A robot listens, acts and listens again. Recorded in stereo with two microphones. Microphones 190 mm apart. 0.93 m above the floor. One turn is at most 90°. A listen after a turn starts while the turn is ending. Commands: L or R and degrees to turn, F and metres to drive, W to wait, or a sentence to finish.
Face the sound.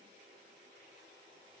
W
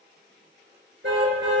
R75
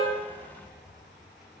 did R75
W
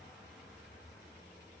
W
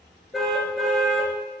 Found it: a car horn, straight ahead, over 4 m away.